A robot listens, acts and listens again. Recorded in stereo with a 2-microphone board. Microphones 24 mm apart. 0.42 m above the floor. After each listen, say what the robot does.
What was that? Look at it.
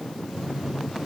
Turn 90° right.
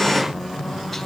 Found it: a phone buzzing, straight ahead, over 4 m away.